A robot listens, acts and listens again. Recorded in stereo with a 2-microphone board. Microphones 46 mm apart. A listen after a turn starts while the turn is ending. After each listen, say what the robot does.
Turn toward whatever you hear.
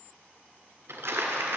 Turn 65° right.
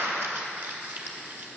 Turn 50° right.
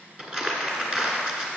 Turn 15° right.
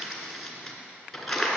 Facing the crumpling.